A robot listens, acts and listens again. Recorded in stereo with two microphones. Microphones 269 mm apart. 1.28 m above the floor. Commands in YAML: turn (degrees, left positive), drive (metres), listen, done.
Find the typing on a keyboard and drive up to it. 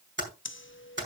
turn: -40
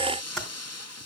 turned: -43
drive: 1.0
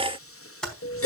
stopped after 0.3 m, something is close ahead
done: "Blocked. The typing on a keyboard is further on, straight ahead."